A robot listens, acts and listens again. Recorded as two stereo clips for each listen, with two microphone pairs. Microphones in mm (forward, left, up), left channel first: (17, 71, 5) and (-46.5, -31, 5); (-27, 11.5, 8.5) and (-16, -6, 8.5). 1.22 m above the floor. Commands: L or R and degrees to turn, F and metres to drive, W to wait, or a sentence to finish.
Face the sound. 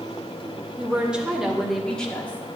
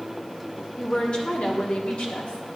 L135
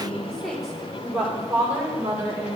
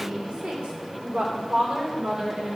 R50
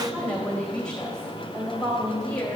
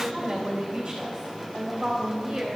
Facing the woman speaking.